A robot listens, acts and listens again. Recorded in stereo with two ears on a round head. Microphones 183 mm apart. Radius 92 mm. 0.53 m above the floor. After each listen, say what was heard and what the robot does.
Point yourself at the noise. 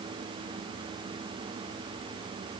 Keep listening.
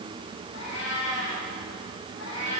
The cat meowing: about 65° left or 115° left. Turn 65° left.
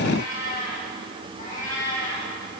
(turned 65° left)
So it is at 40° left. Turn 40° left.
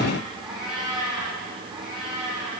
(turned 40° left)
Found it: a cat meowing, straight ahead, over 4 m away.